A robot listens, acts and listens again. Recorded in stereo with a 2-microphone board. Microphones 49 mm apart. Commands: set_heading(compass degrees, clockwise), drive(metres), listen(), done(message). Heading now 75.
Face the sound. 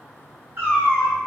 set_heading(125)
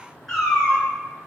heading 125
set_heading(110)
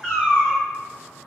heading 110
set_heading(95)
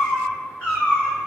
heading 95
set_heading(65)
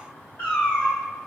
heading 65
set_heading(20)
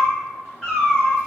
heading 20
done("Found it: a cat meowing, straight ahead.")